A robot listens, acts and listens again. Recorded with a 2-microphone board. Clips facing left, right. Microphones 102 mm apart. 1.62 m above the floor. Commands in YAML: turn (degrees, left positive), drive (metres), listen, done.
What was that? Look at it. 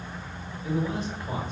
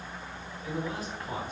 turn: 25
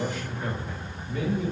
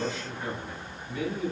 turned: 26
turn: 35
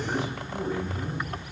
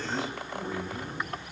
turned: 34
turn: 115
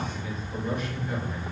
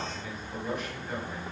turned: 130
done: "Found it: a man speaking, straight ahead."